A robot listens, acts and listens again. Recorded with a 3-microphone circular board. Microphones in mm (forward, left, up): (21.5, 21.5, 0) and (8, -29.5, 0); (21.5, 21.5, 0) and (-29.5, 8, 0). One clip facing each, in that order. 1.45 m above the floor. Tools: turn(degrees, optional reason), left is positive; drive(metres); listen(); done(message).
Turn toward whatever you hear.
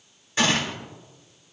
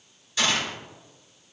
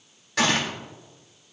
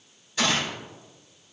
turn(degrees=20, reason="The gunshot: 20° left.")
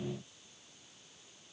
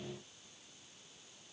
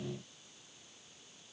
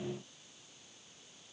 done("I heard a gunshot from this way, but can't make it out now.")